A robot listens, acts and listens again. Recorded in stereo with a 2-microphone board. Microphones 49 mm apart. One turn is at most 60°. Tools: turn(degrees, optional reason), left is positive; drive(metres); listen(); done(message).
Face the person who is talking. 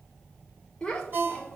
turn(degrees=30)
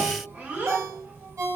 turn(degrees=-30, reason="So it is at 30° right.")
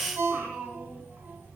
turn(degrees=-30, reason="The child speaking is now 30° right.")
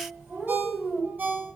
turn(degrees=-20, reason="The child speaking is now 20° right.")
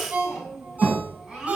turn(degrees=-10, reason="The child speaking is now 10° right.")
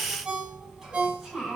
done("Facing the child speaking, 2 to 4 m away.")